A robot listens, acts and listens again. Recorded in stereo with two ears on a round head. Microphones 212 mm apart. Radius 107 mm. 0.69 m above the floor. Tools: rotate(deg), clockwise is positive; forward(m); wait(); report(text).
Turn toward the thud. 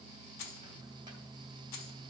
wait()
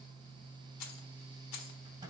wait()
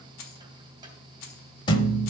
rotate(-20)
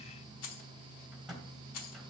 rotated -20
wait()
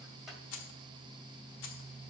report("I heard a thud, but can't make it out now. It was about straight ahead or 140° left.")